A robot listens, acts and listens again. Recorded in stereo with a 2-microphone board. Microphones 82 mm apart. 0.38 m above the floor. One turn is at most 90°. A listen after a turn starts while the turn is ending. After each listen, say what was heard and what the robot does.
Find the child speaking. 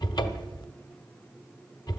Keep listening.
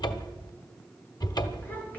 The child speaking: about 20° left or 160° left. Turn 20° left.
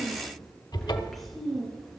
Found it: a child speaking, straight ahead, over 4 m away.